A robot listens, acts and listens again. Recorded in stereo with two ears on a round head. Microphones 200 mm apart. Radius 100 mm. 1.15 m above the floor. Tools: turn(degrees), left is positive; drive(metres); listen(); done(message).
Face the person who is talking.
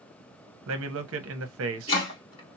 turn(degrees=-65)
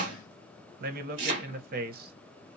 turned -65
turn(degrees=-45)
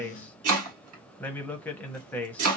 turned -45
done("Found it: a man speaking, straight ahead, under 1 m away.")